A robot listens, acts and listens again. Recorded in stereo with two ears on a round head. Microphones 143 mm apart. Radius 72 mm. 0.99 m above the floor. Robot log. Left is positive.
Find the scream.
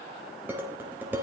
cmd idle
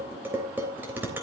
cmd idle
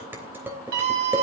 cmd yaw -90
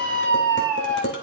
note: So it is at 10° left.
cmd yaw +10
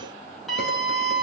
end: Facing the scream, over 4 m away.